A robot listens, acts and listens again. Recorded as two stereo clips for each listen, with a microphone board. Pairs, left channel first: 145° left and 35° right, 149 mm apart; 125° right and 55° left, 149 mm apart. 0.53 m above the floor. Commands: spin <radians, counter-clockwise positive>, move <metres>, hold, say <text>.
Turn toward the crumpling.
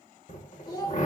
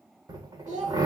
hold
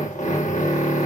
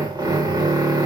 hold
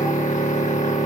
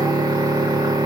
say I can't make out crumpling, only a drill and a child speaking.